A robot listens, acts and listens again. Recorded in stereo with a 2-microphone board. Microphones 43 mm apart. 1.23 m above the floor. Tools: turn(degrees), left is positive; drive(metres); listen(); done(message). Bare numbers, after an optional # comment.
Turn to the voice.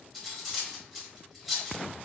listen()
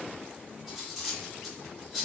listen()
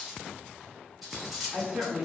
# The woman speaking: about 25° right or 155° right.
turn(-25)
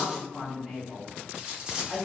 done("Facing the woman speaking, 1 to 2 m away.")